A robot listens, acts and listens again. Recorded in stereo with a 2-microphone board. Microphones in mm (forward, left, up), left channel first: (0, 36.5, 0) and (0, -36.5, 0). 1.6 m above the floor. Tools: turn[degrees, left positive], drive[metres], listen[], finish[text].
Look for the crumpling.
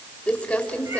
Thought: The crumpling: about 20° left or 160° left.
Action: turn[20]
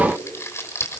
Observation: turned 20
Thought: So it is at 140° left.
Action: turn[140]
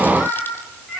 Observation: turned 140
Action: listen[]
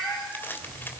Thought: The crumpling is now 30° left.
Action: turn[30]
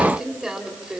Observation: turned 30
Thought: The crumpling is now 10° right.
Action: turn[-10]
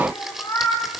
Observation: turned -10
Action: finish[Found it: crumpling, straight ahead.]